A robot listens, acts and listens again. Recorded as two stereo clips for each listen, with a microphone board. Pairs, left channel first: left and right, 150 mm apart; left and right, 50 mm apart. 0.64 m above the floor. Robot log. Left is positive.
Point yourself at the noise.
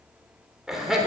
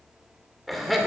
cmd yaw -30
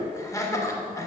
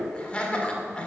note: So it is at 25° left.
cmd yaw +25
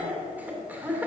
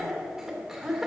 note: The laughter is now 10° right.
cmd yaw -10
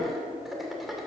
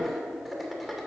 end: Facing the laughter.